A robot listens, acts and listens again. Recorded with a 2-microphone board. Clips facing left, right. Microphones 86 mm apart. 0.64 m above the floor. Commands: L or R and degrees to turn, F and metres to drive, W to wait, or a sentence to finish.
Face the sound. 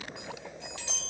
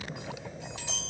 R15
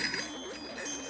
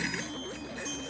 W
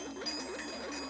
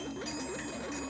W
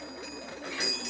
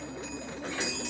R150
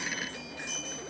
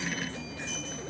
W
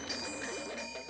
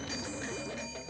W
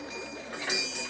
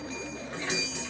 L15
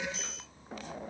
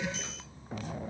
W
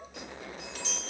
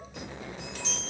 Facing the chime.